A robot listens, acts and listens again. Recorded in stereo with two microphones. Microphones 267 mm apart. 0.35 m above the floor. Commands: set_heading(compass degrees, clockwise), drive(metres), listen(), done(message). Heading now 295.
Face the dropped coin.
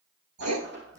set_heading(340)
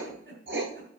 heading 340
listen()
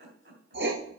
done("I heard a dropped coin, but can't make it out now. It was about straight ahead or 90° right.")